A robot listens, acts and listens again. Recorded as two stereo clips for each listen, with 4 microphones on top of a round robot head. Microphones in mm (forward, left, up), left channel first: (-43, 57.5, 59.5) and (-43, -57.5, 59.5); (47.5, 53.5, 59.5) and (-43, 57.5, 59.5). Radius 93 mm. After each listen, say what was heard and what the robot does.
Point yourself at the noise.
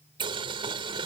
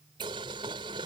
The boiling: 130° right. Turn 130° right.
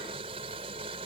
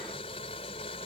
The boiling is now 40° right. Turn 40° right.
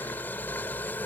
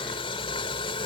The boiling is now 15° left. Turn 15° left.
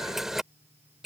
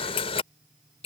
Facing the boiling.